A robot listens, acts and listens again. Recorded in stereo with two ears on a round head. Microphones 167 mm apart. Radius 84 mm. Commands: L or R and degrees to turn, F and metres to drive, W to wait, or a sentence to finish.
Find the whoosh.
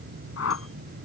L90
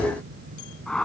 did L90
Facing the whoosh.